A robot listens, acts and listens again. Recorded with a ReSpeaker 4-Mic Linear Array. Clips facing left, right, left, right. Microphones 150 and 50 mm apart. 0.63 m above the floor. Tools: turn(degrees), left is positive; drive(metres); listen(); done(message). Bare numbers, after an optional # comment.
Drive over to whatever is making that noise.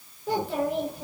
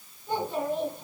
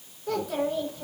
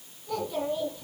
turn(90)
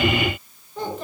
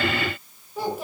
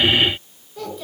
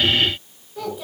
# So it is at 10° right.
turn(-10)
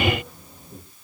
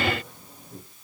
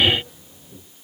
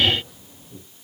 drive(1.0)
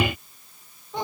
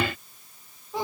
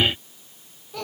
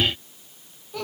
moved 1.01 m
drive(1.0)
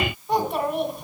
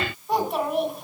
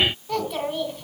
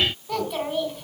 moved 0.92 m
drive(1.0)
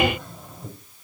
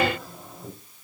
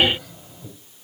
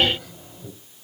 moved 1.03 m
drive(1.0)
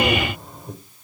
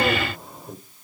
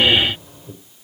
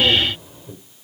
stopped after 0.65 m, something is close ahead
done("Arrived at the child speaking, straight ahead.")